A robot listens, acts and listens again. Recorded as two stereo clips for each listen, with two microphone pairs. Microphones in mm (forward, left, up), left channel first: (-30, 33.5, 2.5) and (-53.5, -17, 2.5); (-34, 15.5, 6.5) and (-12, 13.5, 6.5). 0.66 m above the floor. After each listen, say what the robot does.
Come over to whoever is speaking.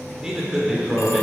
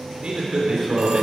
Turn 35° right.
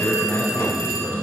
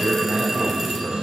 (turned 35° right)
Turn 15° left.
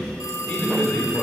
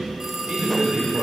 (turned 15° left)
Drive 1.0 m forward.
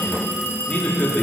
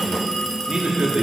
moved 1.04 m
Drive 1.0 m forward.
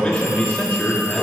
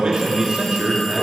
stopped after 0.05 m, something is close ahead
Arrived at the man speaking, straight ahead.